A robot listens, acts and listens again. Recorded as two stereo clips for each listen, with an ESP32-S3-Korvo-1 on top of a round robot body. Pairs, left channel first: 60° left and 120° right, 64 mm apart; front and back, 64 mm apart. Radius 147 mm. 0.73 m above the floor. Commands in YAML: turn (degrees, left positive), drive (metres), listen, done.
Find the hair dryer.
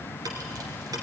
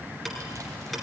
listen: true
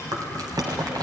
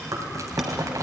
listen: true
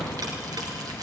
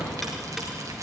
done: "I can't make out a hair dryer, only ticking and chewing."